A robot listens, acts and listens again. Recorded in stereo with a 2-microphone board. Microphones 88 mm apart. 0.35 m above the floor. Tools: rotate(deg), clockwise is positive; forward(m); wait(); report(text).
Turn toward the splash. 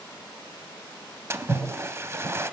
rotate(30)
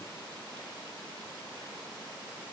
wait()
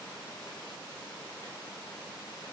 report("I heard a splash, but can't make it out now. It was about straight ahead or 120° right.")